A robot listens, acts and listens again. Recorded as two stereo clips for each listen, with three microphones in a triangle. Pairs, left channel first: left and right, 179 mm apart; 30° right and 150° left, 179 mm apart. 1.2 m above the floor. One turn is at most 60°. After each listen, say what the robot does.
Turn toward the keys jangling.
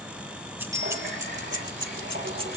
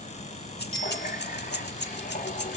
Turn 30° right.
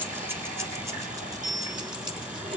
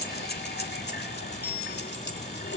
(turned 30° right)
Turn 25° right.
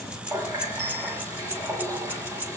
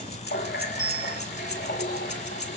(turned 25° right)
Turn 10° right.
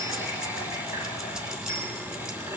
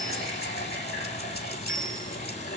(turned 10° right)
Keep listening.
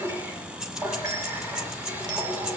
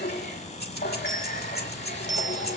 Found it: keys jangling, straight ahead, 2 to 4 m away.